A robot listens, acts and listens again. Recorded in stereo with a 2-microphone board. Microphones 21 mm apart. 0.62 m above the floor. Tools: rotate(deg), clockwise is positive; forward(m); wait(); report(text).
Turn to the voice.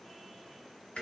wait()
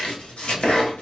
wait()
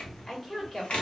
rotate(-35)
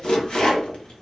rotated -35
wait()
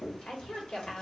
rotate(-110)
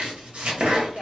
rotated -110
wait()
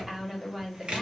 rotate(20)
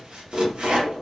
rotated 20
wait()
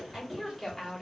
report("Found it: a woman speaking, straight ahead, 1 to 2 m away.")